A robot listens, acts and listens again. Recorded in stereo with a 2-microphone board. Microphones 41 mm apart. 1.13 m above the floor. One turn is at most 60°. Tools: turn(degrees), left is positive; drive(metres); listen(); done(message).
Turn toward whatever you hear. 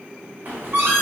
turn(degrees=-45)
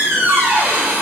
turn(degrees=-60)
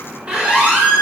turn(degrees=-30)
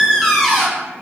done("Facing the squeak, under 1 m away.")